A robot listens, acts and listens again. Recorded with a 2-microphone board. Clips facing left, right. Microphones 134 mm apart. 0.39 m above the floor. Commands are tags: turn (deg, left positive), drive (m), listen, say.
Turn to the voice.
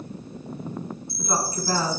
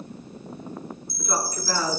<turn deg="25"/>
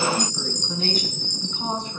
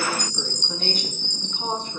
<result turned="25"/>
<say>Facing the woman speaking.</say>